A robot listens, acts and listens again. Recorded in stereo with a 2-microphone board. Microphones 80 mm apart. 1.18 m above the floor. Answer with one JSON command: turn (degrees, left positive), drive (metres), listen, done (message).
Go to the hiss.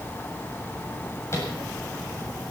{"listen": true}
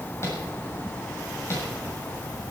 {"listen": true}
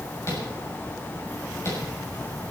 {"done": "I can't make out a hiss to turn to."}